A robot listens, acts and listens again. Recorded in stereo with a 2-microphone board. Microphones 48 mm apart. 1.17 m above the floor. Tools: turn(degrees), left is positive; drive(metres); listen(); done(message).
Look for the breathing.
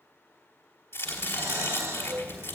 turn(degrees=-90)
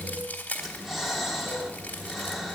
done("Found it: breathing, straight ahead.")